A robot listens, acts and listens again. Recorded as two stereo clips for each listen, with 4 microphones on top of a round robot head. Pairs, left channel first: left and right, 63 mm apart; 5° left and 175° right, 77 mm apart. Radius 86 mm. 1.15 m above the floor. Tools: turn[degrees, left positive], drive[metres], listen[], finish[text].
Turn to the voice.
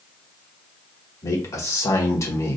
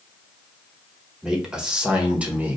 Thought: The man speaking: 115° left.
Action: turn[115]
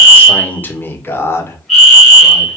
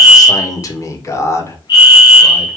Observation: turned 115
Thought: The man speaking is now 50° left.
Action: turn[50]
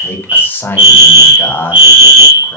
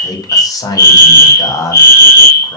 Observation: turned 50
Thought: The man speaking is now 35° left.
Action: turn[35]
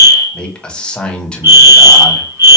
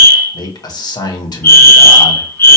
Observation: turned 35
Thought: The man speaking is now 15° left.
Action: turn[15]
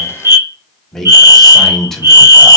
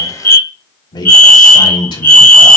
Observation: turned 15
Action: finish[Found it: a man speaking, straight ahead, 1 to 2 m away.]